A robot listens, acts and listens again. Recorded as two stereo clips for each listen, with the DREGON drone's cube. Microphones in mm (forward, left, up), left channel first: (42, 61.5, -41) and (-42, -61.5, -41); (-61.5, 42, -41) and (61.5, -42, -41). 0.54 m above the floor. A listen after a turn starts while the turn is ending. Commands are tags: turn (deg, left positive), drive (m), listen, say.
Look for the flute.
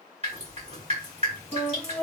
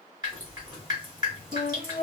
<turn deg="-30"/>
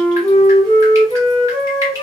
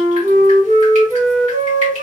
<say>Facing the flute, 1 to 2 m away.</say>